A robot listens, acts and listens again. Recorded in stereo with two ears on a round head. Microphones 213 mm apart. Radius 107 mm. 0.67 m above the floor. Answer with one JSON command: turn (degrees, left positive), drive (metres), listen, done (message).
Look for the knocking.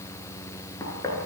{"turn": 30}
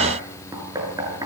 {"turn": -15}
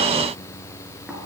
{"listen": true}
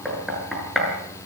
{"done": "Facing the knocking, over 4 m away."}